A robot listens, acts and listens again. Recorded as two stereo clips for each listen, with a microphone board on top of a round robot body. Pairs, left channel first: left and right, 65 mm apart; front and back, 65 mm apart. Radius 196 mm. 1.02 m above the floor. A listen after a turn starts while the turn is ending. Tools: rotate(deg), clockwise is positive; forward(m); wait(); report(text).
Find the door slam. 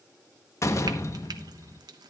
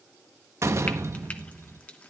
rotate(-135)
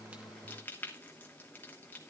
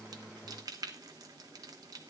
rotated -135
report("Facing where the door slam came from. I can't hear it now.")